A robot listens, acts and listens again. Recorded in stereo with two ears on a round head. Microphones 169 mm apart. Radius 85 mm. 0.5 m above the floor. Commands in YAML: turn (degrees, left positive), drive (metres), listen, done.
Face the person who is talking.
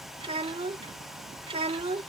turn: -30
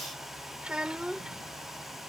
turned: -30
done: "Facing the child speaking."